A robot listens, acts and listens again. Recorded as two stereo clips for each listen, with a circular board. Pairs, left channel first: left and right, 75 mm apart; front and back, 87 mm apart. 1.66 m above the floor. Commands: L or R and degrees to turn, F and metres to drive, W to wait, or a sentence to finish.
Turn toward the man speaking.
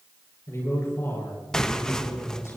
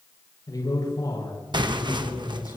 L35
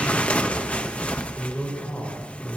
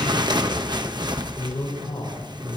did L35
L20
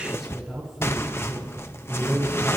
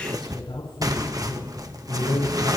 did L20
Facing the man speaking, over 4 m away.